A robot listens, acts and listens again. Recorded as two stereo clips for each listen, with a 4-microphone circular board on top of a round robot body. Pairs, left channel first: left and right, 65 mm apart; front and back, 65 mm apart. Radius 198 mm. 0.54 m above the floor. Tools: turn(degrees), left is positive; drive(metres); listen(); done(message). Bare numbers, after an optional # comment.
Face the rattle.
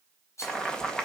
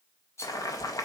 # The rattle: 45° left.
turn(45)
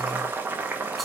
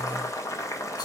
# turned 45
listen()
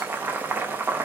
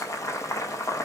listen()
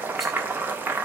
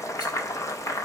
done("Facing where the rattle came from. I can't hear it now.")